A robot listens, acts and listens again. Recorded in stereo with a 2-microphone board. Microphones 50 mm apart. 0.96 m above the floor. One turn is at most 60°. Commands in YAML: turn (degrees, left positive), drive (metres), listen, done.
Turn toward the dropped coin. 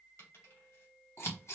turn: 60
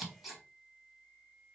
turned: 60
listen: true
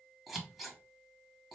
done: "I heard a dropped coin, but can't make it out now. It was about 5° left or 55° left."